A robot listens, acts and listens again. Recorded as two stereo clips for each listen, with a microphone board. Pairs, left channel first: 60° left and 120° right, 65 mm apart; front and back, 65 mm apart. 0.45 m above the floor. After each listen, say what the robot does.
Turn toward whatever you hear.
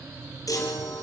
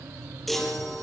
Turn 90° left.
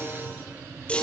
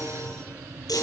Turn 15° right.
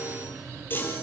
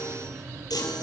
Facing the chime, over 4 m away.